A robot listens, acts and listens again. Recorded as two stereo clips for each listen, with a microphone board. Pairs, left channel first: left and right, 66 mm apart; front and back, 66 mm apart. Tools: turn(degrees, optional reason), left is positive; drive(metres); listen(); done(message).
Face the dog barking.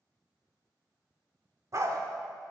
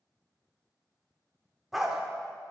turn(degrees=-100, reason="The dog barking: 100° right.")
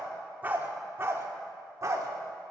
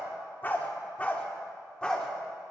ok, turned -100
turn(degrees=-75, reason="The dog barking is now 75° right.")
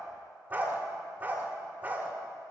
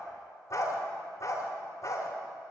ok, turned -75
turn(degrees=-30, reason="The dog barking is now 30° right.")
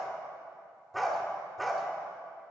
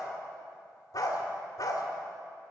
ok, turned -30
done("Facing the dog barking, 1 to 2 m away.")